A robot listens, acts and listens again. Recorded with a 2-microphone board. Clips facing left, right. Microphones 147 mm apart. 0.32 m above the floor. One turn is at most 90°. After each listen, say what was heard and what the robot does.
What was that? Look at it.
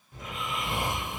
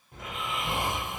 The snoring: about 65° right or 115° right. Turn 65° right.
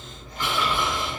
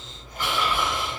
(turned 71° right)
Found it: snoring, straight ahead, 1 to 2 m away.